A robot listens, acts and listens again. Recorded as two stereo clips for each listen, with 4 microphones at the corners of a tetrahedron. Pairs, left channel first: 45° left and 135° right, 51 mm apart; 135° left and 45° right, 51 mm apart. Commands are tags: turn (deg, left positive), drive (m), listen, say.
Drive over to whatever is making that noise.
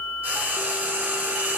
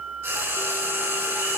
<turn deg="-75"/>
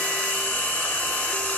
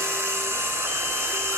<turn deg="-10"/>
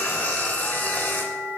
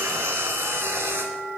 <drive m="1.0"/>
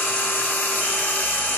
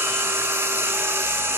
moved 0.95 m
<drive m="1.0"/>
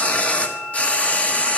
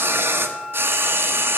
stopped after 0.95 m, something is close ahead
<turn deg="-15"/>
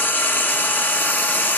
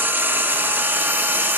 <say>I am next to the frying.</say>